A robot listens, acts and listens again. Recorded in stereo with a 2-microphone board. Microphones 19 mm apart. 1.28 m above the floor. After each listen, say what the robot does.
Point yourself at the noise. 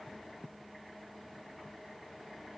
Keep listening.
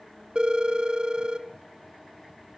Turn 55° right.
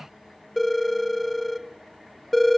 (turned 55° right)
Found it: a phone ringing, straight ahead.